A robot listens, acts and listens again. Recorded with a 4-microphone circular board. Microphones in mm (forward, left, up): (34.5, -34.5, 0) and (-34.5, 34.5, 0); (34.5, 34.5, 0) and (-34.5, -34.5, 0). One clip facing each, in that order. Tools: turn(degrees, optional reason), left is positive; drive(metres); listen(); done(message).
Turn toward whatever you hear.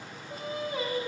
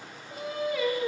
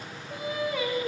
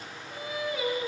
done("Facing the singing.")